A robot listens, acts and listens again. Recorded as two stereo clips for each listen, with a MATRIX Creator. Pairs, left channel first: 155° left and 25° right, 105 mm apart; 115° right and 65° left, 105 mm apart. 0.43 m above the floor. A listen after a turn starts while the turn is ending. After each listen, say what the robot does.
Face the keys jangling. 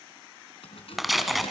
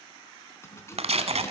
Turn 175° right.
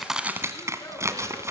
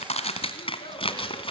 Keep listening.
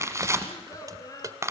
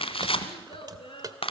Turn 25° left.
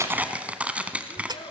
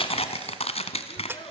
Facing the keys jangling.